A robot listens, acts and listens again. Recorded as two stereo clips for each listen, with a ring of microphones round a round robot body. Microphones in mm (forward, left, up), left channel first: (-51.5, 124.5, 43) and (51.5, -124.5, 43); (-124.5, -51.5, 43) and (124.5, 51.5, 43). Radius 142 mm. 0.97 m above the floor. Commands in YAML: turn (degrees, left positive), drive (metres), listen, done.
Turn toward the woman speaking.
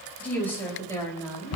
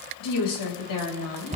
turn: -170
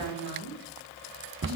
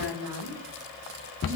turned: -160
turn: -25
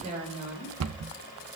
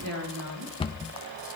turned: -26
done: "Facing the woman speaking, over 4 m away."